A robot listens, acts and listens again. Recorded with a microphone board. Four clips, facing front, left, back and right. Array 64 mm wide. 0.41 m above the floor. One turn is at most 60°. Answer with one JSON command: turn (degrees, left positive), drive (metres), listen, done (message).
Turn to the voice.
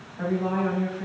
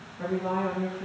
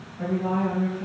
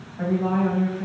{"turn": -60}
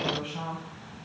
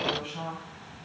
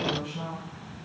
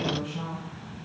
{"turn": 25}
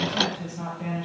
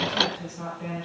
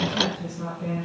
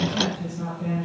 {"turn": 15}
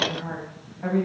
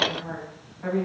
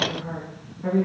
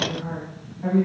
{"done": "Facing the woman speaking, 2 to 4 m away."}